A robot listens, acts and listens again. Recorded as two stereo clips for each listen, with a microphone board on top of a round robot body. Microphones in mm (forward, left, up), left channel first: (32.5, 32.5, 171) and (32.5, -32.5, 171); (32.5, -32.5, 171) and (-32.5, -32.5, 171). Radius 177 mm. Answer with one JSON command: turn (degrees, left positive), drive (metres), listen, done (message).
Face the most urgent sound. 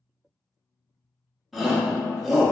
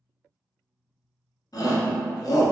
{"done": "Facing the shout."}